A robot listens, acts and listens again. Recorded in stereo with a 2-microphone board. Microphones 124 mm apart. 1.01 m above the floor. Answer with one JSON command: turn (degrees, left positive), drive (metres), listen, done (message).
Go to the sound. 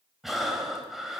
{"turn": 30}
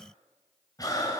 {"turn": 150}
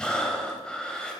{"drive": 1.0}
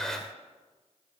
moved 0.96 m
{"drive": 1.0}
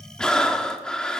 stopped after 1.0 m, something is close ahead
{"done": "I am next to the breathing."}